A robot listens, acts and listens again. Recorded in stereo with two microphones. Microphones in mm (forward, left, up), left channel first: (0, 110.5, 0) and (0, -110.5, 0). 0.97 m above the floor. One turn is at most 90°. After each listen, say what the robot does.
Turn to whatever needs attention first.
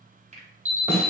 Turn 70° right.
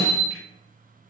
Turn 40° right.
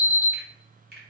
Facing the alarm.